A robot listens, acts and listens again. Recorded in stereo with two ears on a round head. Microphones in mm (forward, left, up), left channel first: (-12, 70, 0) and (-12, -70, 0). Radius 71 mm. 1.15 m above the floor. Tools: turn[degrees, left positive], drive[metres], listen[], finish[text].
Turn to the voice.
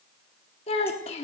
Thought: The child speaking: about 40° left or 140° left.
Action: turn[40]
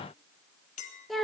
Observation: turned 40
Action: finish[Facing the child speaking, 1 to 2 m away.]